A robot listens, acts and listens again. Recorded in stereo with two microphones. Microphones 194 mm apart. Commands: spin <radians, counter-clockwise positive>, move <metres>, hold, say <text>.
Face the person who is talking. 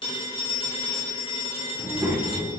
spin -0.52
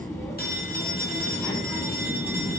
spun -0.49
spin 0.26
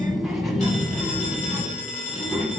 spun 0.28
say Facing the child speaking.